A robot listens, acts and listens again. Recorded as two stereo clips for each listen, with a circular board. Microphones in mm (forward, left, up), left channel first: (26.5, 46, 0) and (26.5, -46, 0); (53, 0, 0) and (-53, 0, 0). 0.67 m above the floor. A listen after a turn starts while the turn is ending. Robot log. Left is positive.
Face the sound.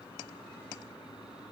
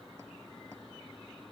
cmd idle
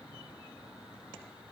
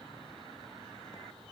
cmd idle
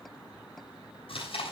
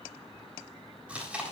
note: The chewing: 100° left.
cmd yaw +100
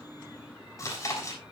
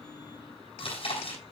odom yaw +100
note: The chewing is now 30° left.
cmd yaw +30
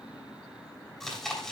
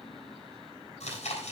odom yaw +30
end: Found it: chewing, straight ahead, over 4 m away.